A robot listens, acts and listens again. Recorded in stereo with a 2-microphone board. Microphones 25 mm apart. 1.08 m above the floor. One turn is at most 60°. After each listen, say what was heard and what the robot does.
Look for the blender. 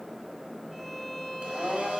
The blender: about 50° right or 130° right. Turn 50° right.
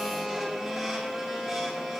Facing the blender, over 4 m away.